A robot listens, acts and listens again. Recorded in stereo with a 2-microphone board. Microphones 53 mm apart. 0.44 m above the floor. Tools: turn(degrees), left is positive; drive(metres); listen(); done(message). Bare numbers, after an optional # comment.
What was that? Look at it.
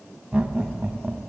turn(-30)
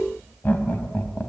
# So it is at 40° left.
turn(40)
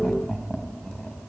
# The laughter is now 15° left.
turn(15)
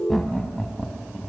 # The laughter is now 15° left.
turn(15)
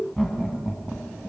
done("Facing the laughter, 2 to 4 m away.")